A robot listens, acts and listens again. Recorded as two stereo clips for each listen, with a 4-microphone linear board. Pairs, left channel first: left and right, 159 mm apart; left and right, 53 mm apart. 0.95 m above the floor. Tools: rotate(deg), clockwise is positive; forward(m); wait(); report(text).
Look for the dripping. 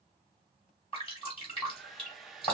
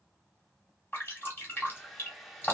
rotate(-35)
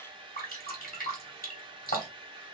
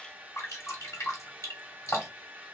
rotate(-110)
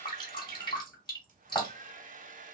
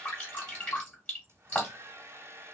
rotate(-30)
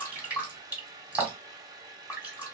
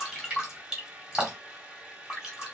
rotate(10)
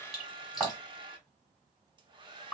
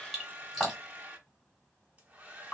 report("Found it: dripping, straight ahead, 2 to 4 m away.")